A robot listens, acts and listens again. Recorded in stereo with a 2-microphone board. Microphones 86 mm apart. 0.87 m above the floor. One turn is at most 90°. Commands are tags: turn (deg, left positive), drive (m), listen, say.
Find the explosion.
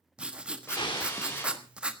<turn deg="65"/>
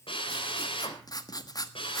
<listen/>
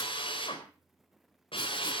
<say>I heard an explosion, but can't make it out now. It was about straight ahead or 50° left.</say>